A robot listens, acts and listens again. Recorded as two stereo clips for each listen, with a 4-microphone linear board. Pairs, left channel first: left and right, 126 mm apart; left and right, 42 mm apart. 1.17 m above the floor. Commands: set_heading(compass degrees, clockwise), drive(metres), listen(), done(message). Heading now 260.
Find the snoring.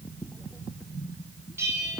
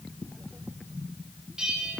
listen()
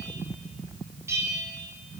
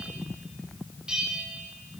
listen()
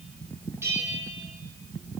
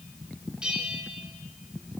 done("I can't make out snoring to turn to.")